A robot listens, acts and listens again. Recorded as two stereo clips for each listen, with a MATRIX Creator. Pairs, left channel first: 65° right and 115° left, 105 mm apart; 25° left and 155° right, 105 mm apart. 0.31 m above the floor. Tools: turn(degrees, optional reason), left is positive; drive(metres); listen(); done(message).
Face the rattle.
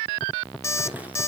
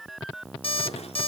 listen()
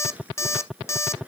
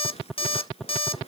turn(degrees=35, reason="The rattle: 35° left.")
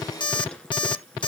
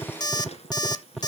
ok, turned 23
turn(degrees=15, reason="The rattle is now 15° left.")
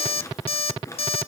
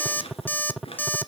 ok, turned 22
done("Facing the rattle.")